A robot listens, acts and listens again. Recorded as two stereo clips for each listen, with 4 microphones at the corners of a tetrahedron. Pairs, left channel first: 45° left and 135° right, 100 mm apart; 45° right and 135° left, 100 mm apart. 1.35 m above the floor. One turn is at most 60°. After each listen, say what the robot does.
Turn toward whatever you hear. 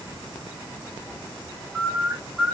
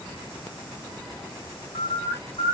Turn 50° right.
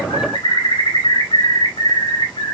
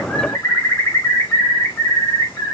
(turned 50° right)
Turn 20° left.
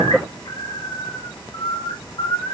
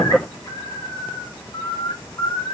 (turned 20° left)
Facing the bird.